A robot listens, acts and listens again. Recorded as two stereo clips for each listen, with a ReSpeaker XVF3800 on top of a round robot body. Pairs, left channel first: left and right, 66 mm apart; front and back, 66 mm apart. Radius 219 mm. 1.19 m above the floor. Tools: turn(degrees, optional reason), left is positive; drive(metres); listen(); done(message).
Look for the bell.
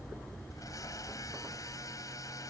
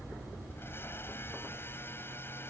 listen()
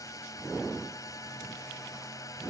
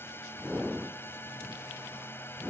listen()
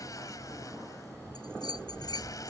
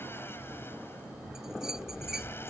turn(degrees=95, reason="The bell: 95° left.")
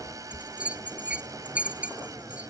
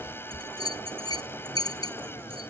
turn(degrees=-20, reason="The bell is now 20° right.")
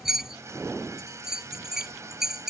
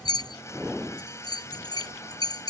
done("Found it: a bell, straight ahead.")